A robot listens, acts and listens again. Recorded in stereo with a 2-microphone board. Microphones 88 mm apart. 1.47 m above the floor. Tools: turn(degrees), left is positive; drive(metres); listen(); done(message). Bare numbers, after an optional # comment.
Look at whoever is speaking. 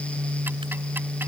listen()
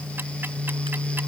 listen()
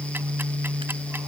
done("I can't make out anyone speaking.")